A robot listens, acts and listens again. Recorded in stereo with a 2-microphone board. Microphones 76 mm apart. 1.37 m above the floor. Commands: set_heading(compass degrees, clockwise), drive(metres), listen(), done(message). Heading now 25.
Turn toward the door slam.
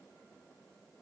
listen()
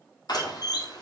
set_heading(310)
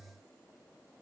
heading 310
listen()
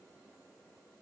done("I heard a door slam, but can't make it out now. It was about straight ahead or 30° left.")